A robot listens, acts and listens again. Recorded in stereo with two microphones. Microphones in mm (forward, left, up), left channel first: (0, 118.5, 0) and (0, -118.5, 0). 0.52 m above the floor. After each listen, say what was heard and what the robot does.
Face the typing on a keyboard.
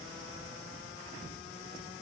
Keep listening.
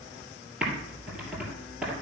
Turn 30° right.
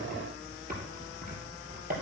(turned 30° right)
So it is at 145° right. Turn 145° right.
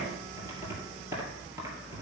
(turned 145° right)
The typing on a keyboard is now 10° right. Turn 10° right.
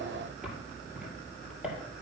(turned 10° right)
Found it: typing on a keyboard, straight ahead, 2 to 4 m away.